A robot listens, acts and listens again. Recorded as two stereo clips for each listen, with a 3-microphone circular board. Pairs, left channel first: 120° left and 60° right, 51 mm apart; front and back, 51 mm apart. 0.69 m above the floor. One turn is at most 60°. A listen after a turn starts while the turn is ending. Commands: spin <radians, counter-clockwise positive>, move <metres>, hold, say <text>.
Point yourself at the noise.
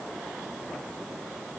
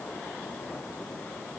hold
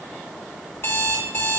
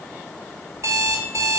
spin 1.05
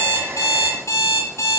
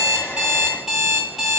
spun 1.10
spin 1.05
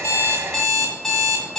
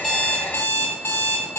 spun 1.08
spin 0.61
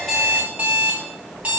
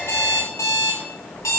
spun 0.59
say Found it: an alarm clock, straight ahead.